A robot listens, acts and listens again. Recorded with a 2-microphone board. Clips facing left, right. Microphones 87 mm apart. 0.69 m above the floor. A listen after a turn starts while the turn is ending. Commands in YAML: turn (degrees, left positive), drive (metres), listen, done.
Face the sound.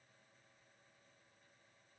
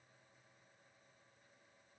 listen: true
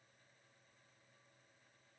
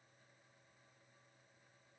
listen: true
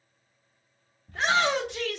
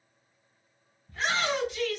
turn: 65
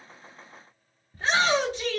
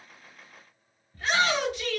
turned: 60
turn: 35
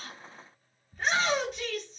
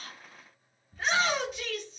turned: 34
done: "Found it: a shout, straight ahead, 1 to 2 m away."